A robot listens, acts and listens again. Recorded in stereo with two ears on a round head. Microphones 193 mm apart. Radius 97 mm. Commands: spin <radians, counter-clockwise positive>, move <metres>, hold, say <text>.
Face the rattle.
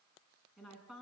hold
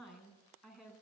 hold
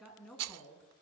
spin -1.57
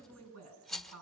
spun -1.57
say Facing the rattle.